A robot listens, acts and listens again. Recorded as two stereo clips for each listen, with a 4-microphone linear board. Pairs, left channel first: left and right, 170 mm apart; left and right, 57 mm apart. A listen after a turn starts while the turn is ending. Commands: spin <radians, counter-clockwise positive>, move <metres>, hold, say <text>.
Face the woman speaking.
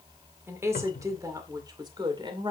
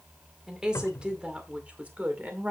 spin -0.52
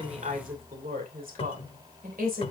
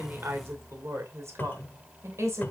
spin -2.01
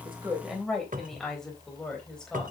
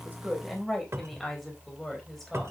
say Facing the woman speaking, 2 to 4 m away.